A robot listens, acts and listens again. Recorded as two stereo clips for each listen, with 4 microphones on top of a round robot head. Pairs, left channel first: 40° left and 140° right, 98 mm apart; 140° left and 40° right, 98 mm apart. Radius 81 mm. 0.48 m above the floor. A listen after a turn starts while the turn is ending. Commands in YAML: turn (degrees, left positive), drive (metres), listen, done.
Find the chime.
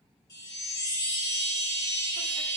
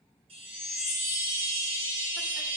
turn: -15
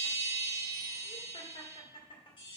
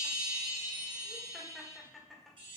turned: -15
done: "Found it: a chime, straight ahead."